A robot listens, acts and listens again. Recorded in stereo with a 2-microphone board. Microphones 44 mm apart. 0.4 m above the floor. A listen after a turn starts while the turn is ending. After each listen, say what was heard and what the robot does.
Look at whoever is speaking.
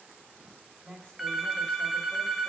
Turn 30° left.
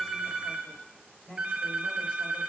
So it is at 135° left. Turn 135° left.
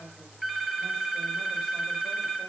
Keep listening.
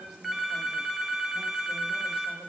Keep listening.
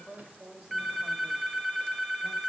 The woman speaking is now 10° right. Turn 10° right.
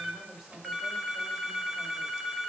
Found it: a woman speaking, straight ahead, 1 to 2 m away.